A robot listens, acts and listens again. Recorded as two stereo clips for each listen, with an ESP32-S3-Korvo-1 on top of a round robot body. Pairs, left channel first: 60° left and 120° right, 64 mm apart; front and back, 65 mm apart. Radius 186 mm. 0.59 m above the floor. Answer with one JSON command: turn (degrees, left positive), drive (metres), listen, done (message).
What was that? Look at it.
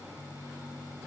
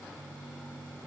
{"listen": true}
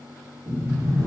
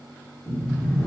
{"turn": -70}
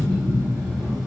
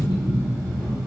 {"turn": -15}
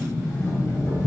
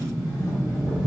{"done": "Facing the sliding door, 1 to 2 m away."}